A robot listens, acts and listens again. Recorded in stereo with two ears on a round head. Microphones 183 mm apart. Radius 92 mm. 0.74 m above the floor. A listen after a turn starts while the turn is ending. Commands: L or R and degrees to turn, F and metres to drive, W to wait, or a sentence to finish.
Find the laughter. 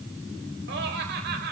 R50
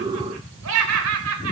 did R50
R75
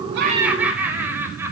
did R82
R10
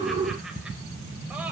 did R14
W
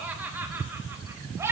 R15
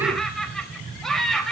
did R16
Found it: laughter, straight ahead.